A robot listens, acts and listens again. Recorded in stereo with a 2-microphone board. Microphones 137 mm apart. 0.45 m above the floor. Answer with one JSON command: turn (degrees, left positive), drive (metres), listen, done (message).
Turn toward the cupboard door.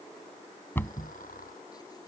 {"turn": 15}
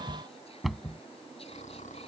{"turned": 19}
{"done": "Facing the cupboard door."}